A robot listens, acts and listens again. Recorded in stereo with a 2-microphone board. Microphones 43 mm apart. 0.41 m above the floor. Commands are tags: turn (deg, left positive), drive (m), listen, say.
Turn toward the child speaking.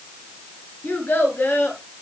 <turn deg="60"/>
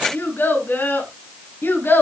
<turn deg="65"/>
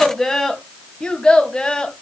<turn deg="20"/>
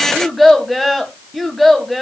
<say>Found it: a child speaking, straight ahead, 2 to 4 m away.</say>